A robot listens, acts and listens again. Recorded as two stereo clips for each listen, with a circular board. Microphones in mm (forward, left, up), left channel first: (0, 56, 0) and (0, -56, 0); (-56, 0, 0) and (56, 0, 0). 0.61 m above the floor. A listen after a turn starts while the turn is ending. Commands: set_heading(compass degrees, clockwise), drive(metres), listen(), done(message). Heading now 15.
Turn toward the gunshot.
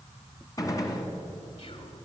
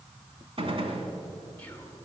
set_heading(340)
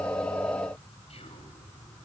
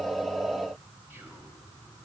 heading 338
done("Facing where the gunshot came from. I can't hear it now.")